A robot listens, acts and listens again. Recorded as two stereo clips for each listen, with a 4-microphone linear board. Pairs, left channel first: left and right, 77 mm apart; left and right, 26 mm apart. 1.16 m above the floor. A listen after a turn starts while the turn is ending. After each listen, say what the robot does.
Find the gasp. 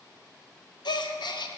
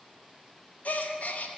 Turn 90° left.
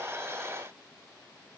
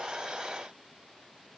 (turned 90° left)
Facing where the gasp came from. I can't hear it now.